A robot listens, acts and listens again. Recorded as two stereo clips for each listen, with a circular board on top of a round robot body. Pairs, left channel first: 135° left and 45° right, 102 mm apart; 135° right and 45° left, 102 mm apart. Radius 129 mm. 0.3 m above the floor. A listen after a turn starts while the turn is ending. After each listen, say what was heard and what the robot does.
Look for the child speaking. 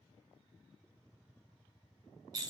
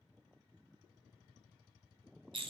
Keep listening.
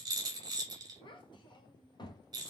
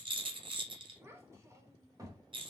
The child speaking: 95° left. Turn 95° left.
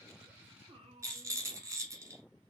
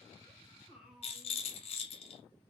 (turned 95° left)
The child speaking is now 40° right. Turn 40° right.
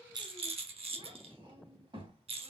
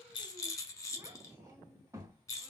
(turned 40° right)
The child speaking is now 10° right. Turn 10° right.
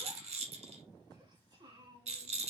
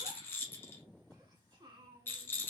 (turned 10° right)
Found it: a child speaking, straight ahead.